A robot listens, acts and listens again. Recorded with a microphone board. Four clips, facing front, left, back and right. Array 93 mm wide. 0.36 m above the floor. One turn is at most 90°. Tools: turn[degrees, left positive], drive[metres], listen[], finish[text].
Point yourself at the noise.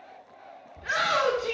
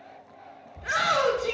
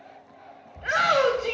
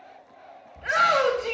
Thought: The shout: 140° right.
Action: turn[-90]
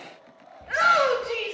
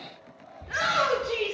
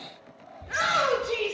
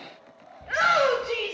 Thought: The shout is now 50° right.
Action: turn[-50]
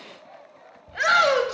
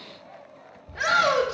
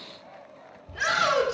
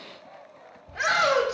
Action: finish[Facing the shout, 1 to 2 m away.]